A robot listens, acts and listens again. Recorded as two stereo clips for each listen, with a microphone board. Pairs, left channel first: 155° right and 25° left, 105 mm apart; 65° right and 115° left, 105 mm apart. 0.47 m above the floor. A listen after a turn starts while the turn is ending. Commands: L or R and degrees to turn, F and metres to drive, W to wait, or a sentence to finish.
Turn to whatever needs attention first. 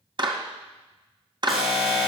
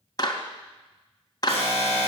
L110
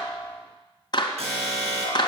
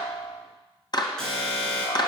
L15
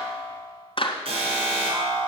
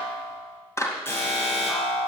Facing the alarm, over 4 m away.